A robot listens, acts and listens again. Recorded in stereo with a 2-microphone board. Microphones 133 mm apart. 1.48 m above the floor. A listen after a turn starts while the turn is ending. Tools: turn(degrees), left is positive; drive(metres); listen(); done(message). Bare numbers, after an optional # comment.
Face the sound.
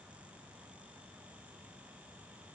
listen()
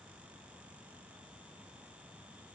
listen()
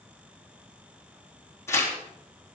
# The tearing paper: about 20° left or 160° left.
turn(20)
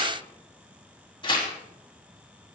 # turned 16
# So it is at 145° left.
turn(145)
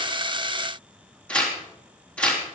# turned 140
# The tearing paper is now 10° left.
turn(10)
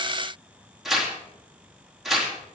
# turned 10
done("Found it: tearing paper, straight ahead, 2 to 4 m away.")